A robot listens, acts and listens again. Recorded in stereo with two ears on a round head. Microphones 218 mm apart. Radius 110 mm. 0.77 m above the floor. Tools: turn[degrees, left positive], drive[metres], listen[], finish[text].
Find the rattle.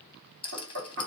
Thought: The rattle: about 20° left or 160° left.
Action: turn[20]
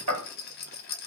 Thought: So it is at 140° left.
Action: turn[140]
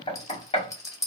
Thought: The rattle is now 15° left.
Action: turn[15]
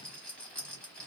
Action: finish[Facing the rattle.]